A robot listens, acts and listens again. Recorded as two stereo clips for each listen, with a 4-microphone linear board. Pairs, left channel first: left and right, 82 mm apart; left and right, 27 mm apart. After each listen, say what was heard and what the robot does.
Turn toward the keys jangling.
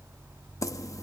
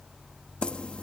The keys jangling: about 40° left or 140° left. Turn 40° left.
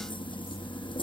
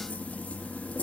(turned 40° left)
So it is at 95° left. Turn 95° left.
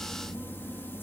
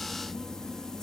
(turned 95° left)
The keys jangling is now 25° left. Turn 25° left.
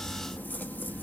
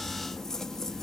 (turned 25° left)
The keys jangling is now 20° left. Turn 20° left.
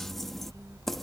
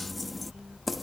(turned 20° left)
Found it: keys jangling, straight ahead.